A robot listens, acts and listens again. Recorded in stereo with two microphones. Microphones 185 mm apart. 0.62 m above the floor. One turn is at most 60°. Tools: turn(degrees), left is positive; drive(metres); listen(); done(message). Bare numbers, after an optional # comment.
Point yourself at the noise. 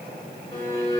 # The violin: about 35° left or 145° left.
turn(35)
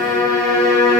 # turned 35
done("Found it: a violin, straight ahead, 1 to 2 m away.")